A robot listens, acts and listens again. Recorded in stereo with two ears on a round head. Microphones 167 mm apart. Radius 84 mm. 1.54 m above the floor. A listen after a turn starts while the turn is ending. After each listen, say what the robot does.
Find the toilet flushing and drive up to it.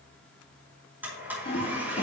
Turn 35° left.
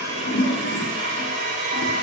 Turn 110° left.
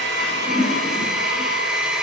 Turn 20° right.
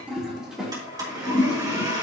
Drive 1.0 m forward.
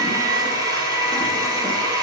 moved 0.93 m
Keep listening.
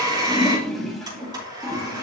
Drive 1.0 m forward.
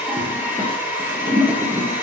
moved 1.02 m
Drive 1.0 m forward.
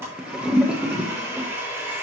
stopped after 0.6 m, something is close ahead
I am next to the toilet flushing.